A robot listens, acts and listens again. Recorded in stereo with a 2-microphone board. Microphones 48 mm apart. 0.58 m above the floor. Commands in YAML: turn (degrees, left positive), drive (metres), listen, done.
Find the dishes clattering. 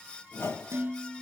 turn: -60
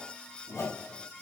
listen: true
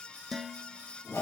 done: "Found it: dishes clattering, straight ahead, 1 to 2 m away."